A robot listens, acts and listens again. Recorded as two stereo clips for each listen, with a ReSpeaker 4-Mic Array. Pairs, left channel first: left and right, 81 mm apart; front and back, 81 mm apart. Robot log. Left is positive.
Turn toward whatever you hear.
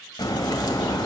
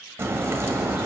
note: The crack: 120° left.
cmd yaw +120
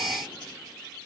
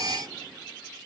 end: Facing where the crack came from. I can't hear it now.